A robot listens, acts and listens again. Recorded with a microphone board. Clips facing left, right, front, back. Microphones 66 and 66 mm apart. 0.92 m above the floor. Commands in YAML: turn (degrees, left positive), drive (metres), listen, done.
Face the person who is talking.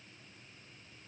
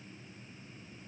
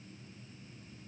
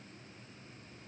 listen: true
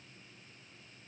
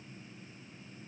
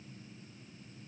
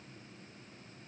listen: true
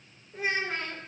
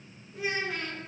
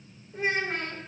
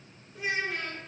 turn: 35
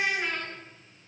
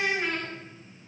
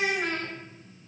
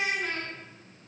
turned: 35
done: "Facing the child speaking."